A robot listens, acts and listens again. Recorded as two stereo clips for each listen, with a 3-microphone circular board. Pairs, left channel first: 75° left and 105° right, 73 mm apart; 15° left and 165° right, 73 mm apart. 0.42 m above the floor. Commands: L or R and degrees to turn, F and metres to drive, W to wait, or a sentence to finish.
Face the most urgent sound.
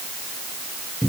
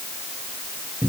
W
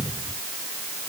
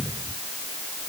W
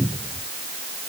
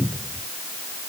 I can't make out anything urgent, only a cupboard door.